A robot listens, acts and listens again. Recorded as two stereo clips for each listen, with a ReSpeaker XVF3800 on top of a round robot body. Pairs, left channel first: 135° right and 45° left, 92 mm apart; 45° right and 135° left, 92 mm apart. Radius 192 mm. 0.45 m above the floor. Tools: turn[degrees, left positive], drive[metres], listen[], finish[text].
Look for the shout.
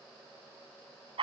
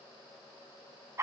Action: listen[]
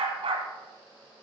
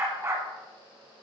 Action: listen[]
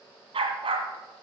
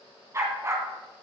Action: finish[I can't make out a shout to turn to.]